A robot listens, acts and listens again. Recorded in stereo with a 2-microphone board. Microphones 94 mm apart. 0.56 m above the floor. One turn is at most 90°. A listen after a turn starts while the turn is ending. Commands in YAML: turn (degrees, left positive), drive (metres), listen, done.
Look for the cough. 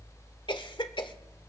turn: 60
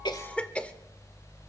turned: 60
turn: 15
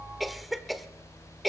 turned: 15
done: "Found it: a cough, straight ahead, 1 to 2 m away."